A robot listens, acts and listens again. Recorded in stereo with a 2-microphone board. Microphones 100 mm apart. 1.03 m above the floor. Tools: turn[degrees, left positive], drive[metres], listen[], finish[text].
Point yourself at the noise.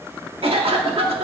Thought: The cough: about 75° right or 105° right.
Action: turn[-75]
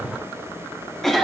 Action: finish[Found it: a cough, straight ahead, 1 to 2 m away.]